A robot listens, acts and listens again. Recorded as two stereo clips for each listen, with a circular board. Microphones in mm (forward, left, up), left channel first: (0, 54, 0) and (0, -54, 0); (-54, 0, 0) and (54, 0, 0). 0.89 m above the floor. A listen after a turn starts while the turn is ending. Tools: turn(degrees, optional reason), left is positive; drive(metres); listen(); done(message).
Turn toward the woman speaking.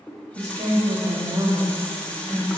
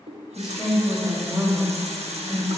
turn(degrees=-65, reason="The woman speaking: 65° right.")
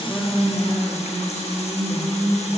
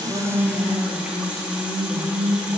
turn(degrees=30, reason="The woman speaking is now 30° left.")
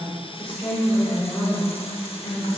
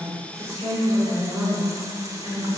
turn(degrees=20, reason="The woman speaking is now 20° left.")
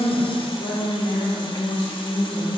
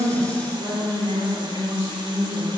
turn(degrees=10, reason="The woman speaking is now 10° left.")
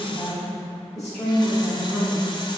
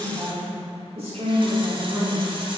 done("Found it: a woman speaking, straight ahead.")